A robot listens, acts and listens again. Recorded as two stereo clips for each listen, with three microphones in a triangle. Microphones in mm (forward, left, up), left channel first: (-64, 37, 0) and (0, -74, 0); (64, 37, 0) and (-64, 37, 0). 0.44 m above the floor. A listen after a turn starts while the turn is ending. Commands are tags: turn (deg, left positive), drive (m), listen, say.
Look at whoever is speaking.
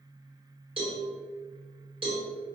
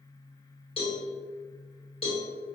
<listen/>
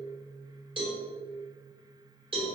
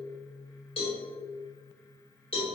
<listen/>
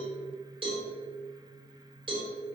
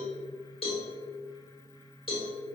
<say>I can't make out anyone speaking, only a cowbell.</say>